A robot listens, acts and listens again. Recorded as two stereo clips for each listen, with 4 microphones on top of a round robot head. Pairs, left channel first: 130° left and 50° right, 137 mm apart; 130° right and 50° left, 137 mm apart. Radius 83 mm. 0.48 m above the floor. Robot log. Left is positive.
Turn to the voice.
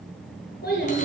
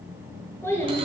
note: The child speaking: 150° left.
cmd yaw +150
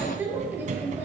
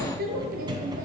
note: The child speaking is now 30° left.
cmd yaw +30
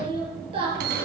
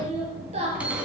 end: Facing the child speaking, over 4 m away.